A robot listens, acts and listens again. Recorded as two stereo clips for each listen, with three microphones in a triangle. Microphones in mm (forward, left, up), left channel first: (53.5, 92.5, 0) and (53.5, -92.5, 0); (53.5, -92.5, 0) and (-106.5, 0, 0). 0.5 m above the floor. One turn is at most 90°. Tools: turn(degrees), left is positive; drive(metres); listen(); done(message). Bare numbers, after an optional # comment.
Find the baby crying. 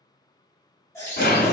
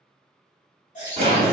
# The baby crying: 15° left.
turn(15)
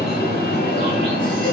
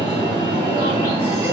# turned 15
listen()
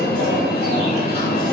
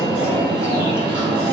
listen()
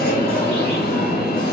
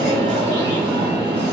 done("Facing where the baby crying came from. I can't hear it now.")